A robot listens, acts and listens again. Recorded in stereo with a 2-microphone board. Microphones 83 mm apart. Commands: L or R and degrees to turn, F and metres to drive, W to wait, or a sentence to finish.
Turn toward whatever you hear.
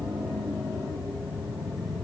W
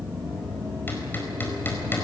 L25
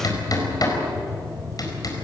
L125
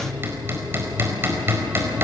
R30
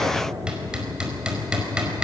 R10
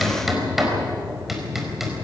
Found it: hammering, straight ahead.